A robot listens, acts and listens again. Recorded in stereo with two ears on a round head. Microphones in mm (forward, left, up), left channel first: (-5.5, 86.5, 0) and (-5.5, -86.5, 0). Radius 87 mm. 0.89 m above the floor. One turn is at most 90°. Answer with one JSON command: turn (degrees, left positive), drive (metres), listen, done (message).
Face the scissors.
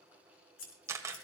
{"turn": 70}
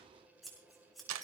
{"done": "Facing the scissors."}